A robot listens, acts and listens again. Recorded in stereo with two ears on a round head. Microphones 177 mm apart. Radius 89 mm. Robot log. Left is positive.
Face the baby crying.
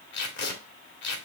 cmd idle
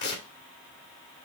cmd idle
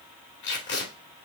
end: I can't make out a baby crying to turn to.